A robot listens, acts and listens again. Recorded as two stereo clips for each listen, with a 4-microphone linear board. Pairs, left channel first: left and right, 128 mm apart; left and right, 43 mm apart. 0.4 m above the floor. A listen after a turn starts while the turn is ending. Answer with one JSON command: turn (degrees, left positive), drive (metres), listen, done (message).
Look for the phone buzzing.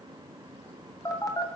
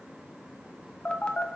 {"turn": 30}
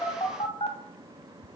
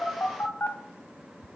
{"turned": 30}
{"turn": 120}
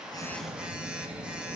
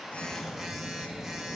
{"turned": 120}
{"turn": -10}
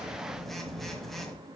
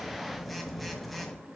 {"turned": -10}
{"done": "Found it: a phone buzzing, straight ahead, 1 to 2 m away."}